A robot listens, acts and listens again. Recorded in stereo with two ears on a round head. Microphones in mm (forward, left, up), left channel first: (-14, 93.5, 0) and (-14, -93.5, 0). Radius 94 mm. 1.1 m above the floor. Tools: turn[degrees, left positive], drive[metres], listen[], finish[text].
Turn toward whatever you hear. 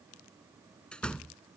Action: turn[30]
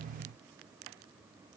Action: listen[]
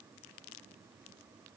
Action: finish[I heard a door slam, but can't make it out now. It was about 25° right or 145° left.]